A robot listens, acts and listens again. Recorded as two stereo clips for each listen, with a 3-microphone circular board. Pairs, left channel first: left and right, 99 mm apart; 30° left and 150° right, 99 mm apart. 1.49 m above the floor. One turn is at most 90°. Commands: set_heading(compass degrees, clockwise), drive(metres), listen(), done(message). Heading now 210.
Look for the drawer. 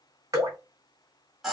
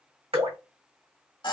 listen()
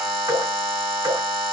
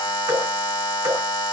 listen()
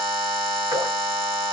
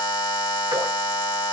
done("I can't make out a drawer to turn to.")